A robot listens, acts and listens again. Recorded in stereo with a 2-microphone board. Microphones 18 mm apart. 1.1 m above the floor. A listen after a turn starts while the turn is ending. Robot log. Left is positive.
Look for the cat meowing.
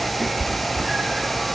note: The cat meowing: about 75° right or 105° right.
cmd yaw -75
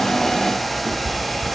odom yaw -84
note: So it is at 15° right.
cmd yaw -15
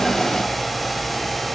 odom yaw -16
cmd idle
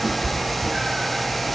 end: Facing the cat meowing, 1 to 2 m away.